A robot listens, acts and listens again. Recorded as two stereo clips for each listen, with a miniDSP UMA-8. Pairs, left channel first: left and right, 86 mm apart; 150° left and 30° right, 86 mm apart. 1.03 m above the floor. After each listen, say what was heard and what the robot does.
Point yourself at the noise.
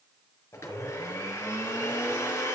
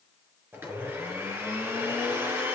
The blender: 35° left. Turn 35° left.
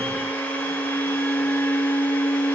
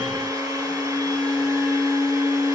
The blender is now 15° left. Turn 15° left.
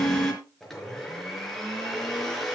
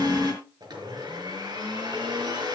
Facing the blender.